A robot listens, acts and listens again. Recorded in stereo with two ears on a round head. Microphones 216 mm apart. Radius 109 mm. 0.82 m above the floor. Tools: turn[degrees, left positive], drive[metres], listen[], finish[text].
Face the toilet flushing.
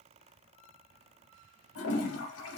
Thought: The toilet flushing: about 65° left or 115° left.
Action: turn[65]
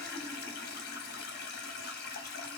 Thought: So it is at 45° left.
Action: turn[45]
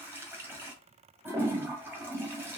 Thought: The toilet flushing is now 10° right.
Action: turn[-10]
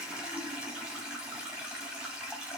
Action: finish[Facing the toilet flushing.]